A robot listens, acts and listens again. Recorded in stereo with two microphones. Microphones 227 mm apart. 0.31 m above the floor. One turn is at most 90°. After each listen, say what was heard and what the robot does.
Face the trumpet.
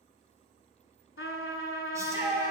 The trumpet: about 65° left or 115° left. Turn 65° left.
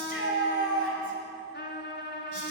So it is at 50° left. Turn 50° left.
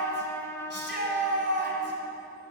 The trumpet is now 10° left. Turn 10° left.
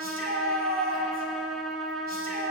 Facing the trumpet.